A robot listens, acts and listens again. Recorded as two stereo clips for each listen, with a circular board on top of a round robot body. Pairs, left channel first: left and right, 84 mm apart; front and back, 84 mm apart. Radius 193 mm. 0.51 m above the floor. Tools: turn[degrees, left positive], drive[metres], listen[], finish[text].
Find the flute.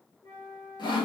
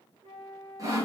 Thought: The flute: 155° left.
Action: turn[155]
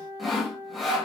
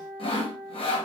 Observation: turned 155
Thought: The flute is now 30° left.
Action: turn[30]
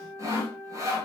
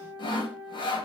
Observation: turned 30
Action: finish[Found it: a flute, straight ahead, 2 to 4 m away.]